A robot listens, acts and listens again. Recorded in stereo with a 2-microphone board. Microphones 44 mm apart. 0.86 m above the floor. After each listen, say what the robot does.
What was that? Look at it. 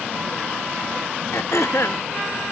Turn 90° left.
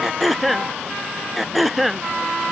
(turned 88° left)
Facing the throat clearing.